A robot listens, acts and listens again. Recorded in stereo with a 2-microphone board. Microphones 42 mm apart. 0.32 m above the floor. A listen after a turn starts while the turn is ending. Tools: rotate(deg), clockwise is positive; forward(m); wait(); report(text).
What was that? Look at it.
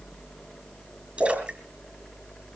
rotate(30)
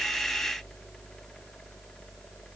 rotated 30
wait()
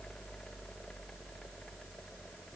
report("I heard a splash, but can't make it out now. It was about straight ahead or 120° right.")